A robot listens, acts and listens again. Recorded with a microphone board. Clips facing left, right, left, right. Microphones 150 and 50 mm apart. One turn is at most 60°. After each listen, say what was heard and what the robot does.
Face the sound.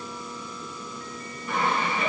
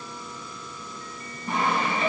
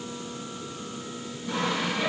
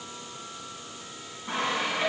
The sawing: about 40° right or 140° right. Turn 40° right.
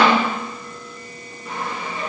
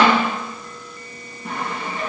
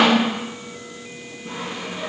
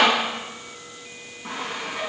So it is at 100° right. Turn 60° right.
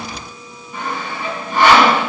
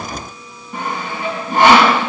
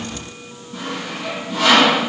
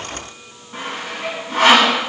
The sawing is now 50° right. Turn 50° right.
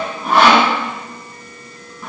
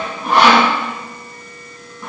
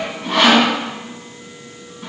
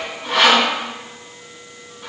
Facing the sawing.